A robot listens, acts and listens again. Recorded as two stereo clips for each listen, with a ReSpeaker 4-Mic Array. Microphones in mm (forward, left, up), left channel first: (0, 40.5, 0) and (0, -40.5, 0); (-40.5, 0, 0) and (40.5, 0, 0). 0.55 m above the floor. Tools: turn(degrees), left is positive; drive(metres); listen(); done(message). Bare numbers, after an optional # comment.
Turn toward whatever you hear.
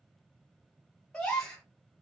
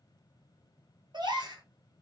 # The gasp: 10° left.
turn(10)
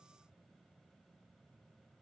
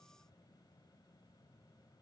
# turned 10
done("I heard a gasp from this way, but can't make it out now.")